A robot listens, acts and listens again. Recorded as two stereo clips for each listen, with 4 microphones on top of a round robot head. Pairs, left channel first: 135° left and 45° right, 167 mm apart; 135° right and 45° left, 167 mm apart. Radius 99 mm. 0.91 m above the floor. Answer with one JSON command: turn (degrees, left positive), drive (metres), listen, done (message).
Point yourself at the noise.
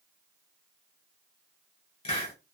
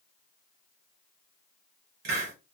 {"turn": 80}
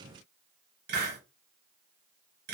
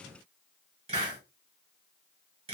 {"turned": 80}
{"turn": -15}
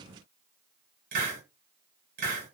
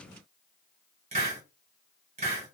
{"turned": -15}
{"done": "Found it: a hiss, straight ahead, 1 to 2 m away."}